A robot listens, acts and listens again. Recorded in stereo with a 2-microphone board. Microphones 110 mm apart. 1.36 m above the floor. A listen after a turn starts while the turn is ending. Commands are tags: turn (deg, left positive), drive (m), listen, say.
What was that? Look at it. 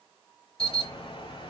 <turn deg="60"/>
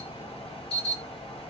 <turn deg="60"/>
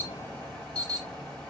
<turn deg="10"/>
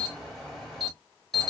<say>Found it: an alarm, straight ahead, 2 to 4 m away.</say>